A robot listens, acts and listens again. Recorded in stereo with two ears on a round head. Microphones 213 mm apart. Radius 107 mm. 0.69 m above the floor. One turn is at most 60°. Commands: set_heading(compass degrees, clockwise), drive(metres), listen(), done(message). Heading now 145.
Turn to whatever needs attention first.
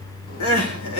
set_heading(85)
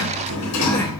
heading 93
listen()
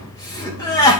set_heading(78)
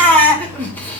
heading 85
set_heading(75)
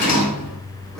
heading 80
listen()
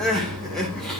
done("Facing the crying.")